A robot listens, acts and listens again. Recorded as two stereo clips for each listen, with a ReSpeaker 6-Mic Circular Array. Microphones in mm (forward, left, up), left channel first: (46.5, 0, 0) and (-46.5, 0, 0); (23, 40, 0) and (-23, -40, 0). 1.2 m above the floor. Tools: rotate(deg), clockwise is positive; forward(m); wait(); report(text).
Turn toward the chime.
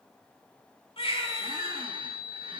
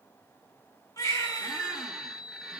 rotate(145)
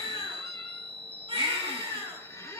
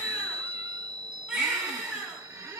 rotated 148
report("Found it: a chime, straight ahead, 1 to 2 m away.")